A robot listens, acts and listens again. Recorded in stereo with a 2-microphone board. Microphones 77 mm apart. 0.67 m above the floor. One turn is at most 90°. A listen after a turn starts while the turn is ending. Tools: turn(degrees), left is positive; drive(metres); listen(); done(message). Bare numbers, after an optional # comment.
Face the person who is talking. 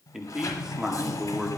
turn(-30)
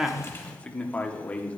# So it is at 20° left.
turn(20)
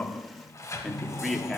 done("Facing the man speaking, 1 to 2 m away.")